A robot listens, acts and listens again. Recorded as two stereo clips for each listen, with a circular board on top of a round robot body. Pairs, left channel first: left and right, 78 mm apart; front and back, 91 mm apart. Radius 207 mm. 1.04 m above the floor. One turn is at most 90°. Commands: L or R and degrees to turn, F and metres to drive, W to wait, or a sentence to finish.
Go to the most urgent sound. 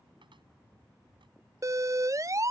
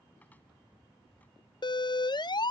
R40
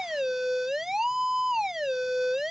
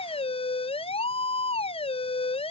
F1.0
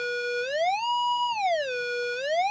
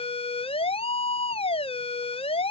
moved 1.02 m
F1.0
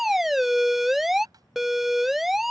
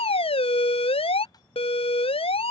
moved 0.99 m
F1.0
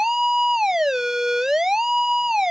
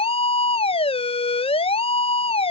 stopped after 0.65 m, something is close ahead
I am next to the siren.